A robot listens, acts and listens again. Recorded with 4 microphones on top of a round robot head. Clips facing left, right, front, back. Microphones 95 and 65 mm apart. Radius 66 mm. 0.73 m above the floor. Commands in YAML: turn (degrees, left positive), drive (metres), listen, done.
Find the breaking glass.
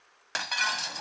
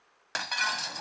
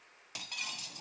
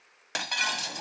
turn: 180
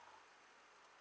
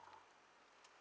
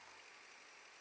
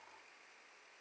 done: "I heard breaking glass from this way, but can't make it out now."